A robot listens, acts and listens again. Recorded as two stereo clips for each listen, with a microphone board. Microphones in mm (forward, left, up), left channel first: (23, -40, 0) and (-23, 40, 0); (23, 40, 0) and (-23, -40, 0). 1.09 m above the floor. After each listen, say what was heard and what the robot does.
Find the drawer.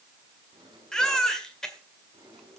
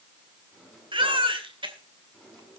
The drawer: 150° left. Turn 150° left.
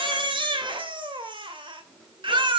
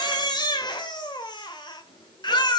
The drawer is now 30° left. Turn 30° left.
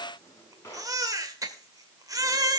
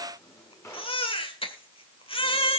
Facing the drawer.